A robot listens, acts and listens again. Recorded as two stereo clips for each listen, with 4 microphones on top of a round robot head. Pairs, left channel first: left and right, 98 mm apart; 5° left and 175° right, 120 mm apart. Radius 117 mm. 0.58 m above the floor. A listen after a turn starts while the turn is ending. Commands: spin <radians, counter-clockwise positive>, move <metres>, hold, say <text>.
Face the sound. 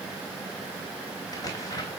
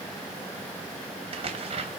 spin 2.53
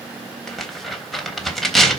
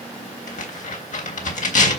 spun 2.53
say Facing the tearing paper.